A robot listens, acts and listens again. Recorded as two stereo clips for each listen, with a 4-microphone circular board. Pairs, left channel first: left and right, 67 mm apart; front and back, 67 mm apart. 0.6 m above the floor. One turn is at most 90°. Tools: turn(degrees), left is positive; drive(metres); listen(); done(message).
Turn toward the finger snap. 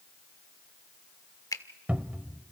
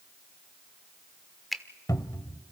turn(degrees=90)
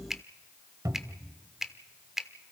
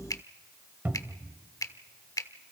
done("Facing the finger snap.")